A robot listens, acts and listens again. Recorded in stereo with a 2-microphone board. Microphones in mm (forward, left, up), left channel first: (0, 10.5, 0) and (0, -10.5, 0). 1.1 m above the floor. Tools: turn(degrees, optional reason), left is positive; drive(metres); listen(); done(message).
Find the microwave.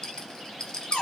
listen()
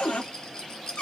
listen()
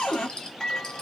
turn(degrees=25, reason="The microwave: about 25° left or 155° left.")
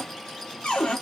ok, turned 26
listen()
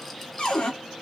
listen()
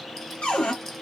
done("I heard a microwave, but can't make it out now. It was about 5° right or 130° left.")